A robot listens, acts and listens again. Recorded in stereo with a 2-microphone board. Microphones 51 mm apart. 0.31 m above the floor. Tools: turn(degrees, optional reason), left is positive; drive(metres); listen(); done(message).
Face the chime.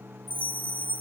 turn(degrees=-45, reason="The chime: about 45° right or 135° right.")
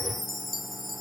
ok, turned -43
done("Found it: a chime, straight ahead, under 1 m away.")